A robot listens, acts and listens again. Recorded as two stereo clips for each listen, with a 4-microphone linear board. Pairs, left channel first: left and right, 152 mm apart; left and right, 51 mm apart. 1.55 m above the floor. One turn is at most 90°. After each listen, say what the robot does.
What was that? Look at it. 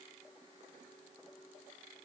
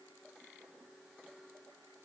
Keep listening.
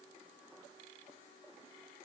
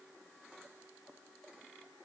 Keep listening.
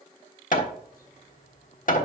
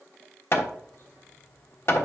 Turn 60° left.
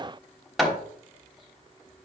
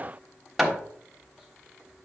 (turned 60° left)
Facing the hammering, 1 to 2 m away.